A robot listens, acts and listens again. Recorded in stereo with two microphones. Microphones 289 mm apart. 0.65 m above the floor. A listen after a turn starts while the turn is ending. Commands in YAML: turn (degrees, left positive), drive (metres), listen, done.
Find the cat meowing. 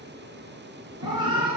turn: -15
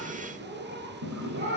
turn: -40
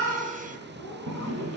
listen: true
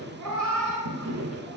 turn: -95
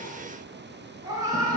turn: -10
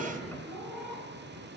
done: "Found it: a cat meowing, straight ahead."